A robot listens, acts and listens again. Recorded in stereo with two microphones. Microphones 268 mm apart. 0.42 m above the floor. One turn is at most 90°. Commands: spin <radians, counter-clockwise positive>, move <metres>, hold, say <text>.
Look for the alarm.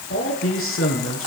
hold
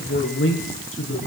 hold
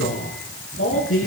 say I can't make out an alarm, only a man speaking.